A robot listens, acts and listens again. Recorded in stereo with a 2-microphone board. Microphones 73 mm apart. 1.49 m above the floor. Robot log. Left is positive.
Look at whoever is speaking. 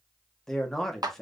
cmd yaw +30
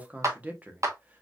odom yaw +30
note: So it is at 20° right.
cmd yaw -20
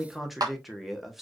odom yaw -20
end: Facing the man speaking.